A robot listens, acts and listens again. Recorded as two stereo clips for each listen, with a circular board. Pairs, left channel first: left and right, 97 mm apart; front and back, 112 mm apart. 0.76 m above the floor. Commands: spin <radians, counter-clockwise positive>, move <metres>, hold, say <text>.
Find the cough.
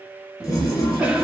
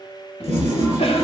spin -0.26
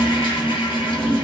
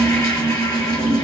say Found it: a cough, straight ahead.